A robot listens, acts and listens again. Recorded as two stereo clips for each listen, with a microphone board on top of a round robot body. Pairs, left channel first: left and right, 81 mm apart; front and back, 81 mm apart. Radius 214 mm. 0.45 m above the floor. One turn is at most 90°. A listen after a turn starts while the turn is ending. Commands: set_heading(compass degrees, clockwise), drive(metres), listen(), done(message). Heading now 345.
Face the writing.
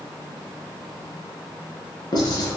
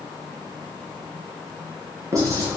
set_heading(255)
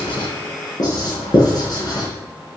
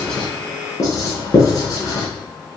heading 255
set_heading(205)
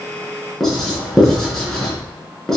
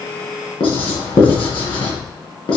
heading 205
done("Facing the writing, over 4 m away.")